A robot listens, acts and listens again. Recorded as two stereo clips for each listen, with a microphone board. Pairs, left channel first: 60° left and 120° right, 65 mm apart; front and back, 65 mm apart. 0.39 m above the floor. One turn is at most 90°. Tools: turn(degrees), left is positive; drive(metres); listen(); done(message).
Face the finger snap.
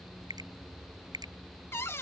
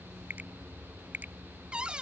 turn(degrees=-90)
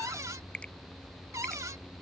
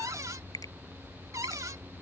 turn(degrees=-15)
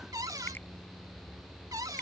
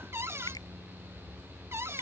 listen()
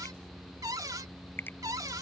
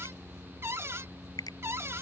done("Found it: a finger snap, straight ahead.")